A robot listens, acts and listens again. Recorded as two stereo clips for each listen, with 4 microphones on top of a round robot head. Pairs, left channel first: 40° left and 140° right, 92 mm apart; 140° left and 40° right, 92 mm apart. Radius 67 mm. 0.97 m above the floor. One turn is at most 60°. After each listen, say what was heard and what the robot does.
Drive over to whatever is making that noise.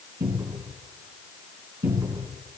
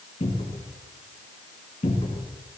The cupboard door: 155° left. Turn 60° left.
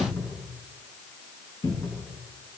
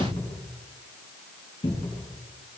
The cupboard door is now 95° left. Turn 60° left.
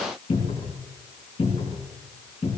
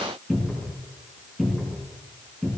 The cupboard door is now 50° left. Turn 50° left.
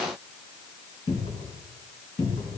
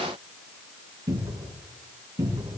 The cupboard door is now 10° left. Turn 10° left.
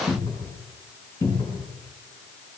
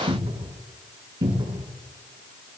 Drive 1.0 m forward.
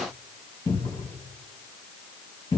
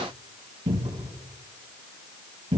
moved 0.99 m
Drive 1.0 m forward.
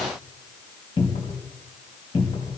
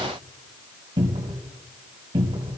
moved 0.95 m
Drive 1.0 m forward.
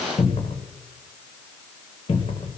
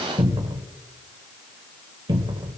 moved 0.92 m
Drive 1.0 m forward.
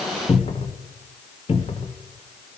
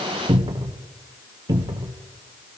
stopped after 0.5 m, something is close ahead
The cupboard door is now 10° left. Turn 10° left.
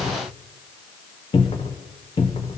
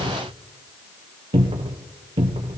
Arrived at the cupboard door, straight ahead.